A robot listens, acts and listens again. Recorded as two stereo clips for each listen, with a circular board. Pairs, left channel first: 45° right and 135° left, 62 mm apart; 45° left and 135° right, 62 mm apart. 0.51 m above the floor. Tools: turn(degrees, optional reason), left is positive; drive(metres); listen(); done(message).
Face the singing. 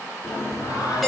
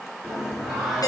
turn(degrees=-55, reason="The singing: 55° right.")
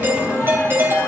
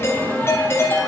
turn(degrees=-20, reason="The singing is now 20° right.")
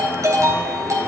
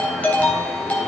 done("Facing the singing, over 4 m away.")